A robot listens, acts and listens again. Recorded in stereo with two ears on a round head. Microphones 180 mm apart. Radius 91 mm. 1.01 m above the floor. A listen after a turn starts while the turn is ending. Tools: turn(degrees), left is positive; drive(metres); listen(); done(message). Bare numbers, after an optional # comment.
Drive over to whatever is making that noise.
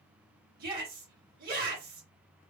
# The shout: about 50° right or 130° right.
turn(-50)
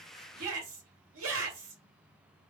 # So it is at 80° right.
turn(-80)
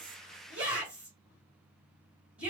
drive(1.0)
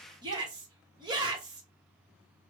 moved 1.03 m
# The shout is now 25° right.
turn(-25)
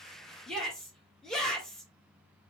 drive(1.0)
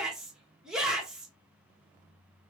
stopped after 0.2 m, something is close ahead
done("Arrived at the shout, straight ahead.")